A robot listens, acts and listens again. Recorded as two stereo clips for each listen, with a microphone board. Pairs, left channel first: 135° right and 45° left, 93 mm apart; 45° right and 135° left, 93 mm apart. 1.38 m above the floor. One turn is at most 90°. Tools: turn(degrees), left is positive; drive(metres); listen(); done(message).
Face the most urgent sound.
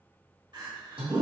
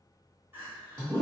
turn(degrees=70)
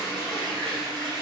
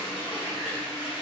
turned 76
listen()
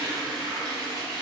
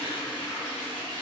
listen()
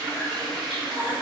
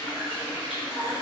done("Found it: crying, straight ahead, 1 to 2 m away.")